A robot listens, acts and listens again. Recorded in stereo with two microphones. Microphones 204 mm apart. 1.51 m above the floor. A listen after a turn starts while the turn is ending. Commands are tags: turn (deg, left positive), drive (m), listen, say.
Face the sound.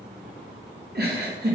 <turn deg="-50"/>
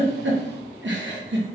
<turn deg="-75"/>
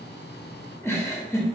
<turn deg="15"/>
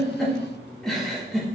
<say>Found it: a giggle, straight ahead.</say>